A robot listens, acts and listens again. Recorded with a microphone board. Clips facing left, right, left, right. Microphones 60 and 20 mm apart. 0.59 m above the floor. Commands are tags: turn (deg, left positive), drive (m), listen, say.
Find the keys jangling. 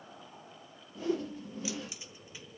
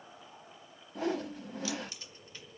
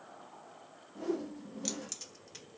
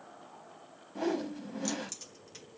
<turn deg="30"/>
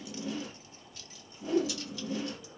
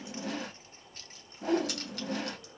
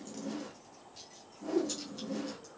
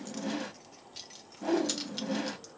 <turn deg="-65"/>
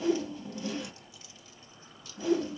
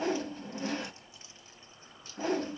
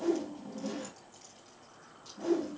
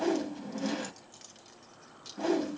<turn deg="-35"/>
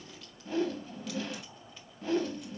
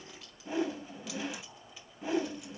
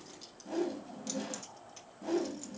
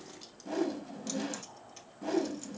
<say>Facing the keys jangling, 1 to 2 m away.</say>